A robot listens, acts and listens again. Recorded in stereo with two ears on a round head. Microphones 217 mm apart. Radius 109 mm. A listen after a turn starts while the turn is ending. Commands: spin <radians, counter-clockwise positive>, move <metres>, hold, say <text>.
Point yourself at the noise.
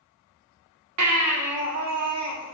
spin -1.31
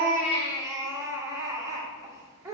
spin -0.26
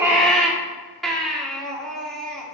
say Found it: a baby crying, straight ahead, 1 to 2 m away.